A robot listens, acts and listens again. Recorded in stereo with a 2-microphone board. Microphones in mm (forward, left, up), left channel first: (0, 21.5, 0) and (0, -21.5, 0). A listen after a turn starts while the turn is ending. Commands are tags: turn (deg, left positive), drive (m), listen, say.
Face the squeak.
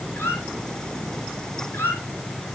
<turn deg="65"/>
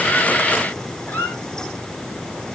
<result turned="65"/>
<turn deg="55"/>
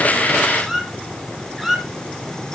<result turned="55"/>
<say>Found it: a squeak, straight ahead.</say>